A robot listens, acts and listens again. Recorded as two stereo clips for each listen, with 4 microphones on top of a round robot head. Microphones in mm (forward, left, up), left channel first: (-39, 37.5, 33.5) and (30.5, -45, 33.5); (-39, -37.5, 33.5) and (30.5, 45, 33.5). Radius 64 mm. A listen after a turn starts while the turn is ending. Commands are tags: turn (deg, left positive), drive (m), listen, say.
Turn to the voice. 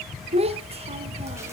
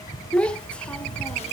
<turn deg="-50"/>
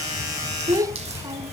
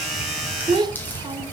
<say>Found it: a child speaking, straight ahead.</say>